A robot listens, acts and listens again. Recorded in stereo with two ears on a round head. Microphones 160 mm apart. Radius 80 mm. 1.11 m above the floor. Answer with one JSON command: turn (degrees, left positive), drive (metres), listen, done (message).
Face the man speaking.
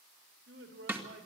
{"turn": -65}
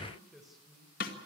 {"done": "Facing the man speaking, 2 to 4 m away."}